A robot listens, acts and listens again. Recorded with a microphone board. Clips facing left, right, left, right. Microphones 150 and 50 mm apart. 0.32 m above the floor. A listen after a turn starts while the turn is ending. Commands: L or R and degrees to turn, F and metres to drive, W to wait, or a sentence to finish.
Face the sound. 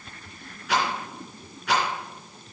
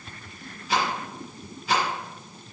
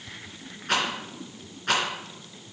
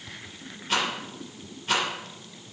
L90
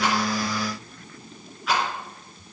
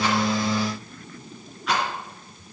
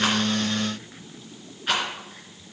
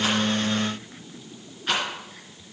Facing the rattle, 2 to 4 m away.